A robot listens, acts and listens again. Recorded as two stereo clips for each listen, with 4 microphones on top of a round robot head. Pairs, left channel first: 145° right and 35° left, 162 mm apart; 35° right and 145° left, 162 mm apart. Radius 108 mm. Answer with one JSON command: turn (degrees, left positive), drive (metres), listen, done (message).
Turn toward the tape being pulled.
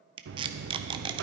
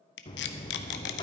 {"turn": -25}
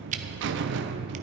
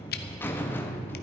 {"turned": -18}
{"turn": -10}
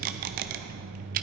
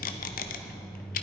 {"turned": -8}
{"done": "Facing the tape being pulled."}